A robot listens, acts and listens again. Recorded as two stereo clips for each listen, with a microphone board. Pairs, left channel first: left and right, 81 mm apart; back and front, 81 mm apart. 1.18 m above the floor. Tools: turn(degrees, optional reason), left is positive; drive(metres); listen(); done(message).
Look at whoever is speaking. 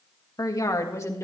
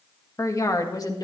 turn(degrees=145, reason="The woman speaking: 145° left.")
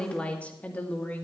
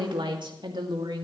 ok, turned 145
turn(degrees=25, reason="The woman speaking is now 25° left.")
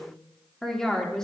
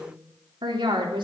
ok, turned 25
turn(degrees=10, reason="The woman speaking is now 10° left.")
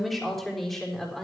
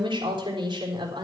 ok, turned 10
done("Facing the woman speaking, over 4 m away.")